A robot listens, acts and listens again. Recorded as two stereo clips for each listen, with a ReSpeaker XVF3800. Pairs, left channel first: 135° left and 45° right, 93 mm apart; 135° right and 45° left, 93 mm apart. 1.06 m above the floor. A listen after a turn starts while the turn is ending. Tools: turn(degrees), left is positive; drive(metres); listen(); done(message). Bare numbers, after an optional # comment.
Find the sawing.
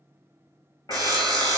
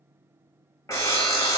# The sawing: 85° right.
turn(-85)
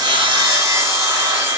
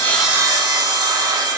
done("Facing the sawing, under 1 m away.")